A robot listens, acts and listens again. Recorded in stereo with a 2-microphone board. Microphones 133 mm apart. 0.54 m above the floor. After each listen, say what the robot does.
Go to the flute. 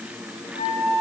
Turn 75° left.
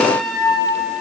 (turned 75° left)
Drive 1.0 m forward.
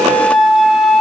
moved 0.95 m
Drive 1.0 m forward.
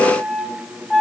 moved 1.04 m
Drive 1.0 m forward.
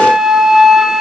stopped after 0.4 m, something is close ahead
I am next to the flute.